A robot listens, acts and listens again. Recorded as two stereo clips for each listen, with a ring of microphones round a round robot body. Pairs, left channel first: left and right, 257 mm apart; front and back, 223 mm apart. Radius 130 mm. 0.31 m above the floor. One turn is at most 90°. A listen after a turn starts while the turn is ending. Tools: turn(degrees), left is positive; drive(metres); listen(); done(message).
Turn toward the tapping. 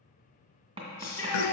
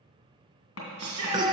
turn(degrees=-20)
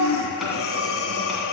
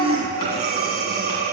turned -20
listen()
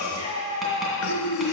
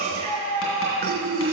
listen()
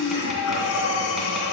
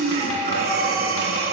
done("I heard tapping from this way, but can't make it out now.")